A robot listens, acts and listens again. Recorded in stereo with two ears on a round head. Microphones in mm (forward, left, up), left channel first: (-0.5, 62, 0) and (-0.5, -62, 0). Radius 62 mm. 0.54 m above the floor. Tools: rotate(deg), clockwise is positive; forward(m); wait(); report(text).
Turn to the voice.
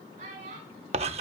rotate(55)
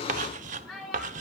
report("Facing the child speaking, over 4 m away.")